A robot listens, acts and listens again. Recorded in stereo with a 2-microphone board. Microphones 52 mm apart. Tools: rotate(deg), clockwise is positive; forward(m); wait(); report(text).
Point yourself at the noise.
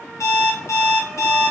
rotate(-90)
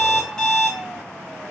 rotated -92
rotate(-15)
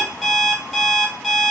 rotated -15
report("Facing the alarm clock, 1 to 2 m away.")